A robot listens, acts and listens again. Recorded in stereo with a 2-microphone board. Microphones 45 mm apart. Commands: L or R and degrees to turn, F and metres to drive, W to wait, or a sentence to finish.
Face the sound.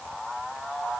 W
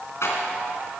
L90
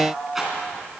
Facing the rattle.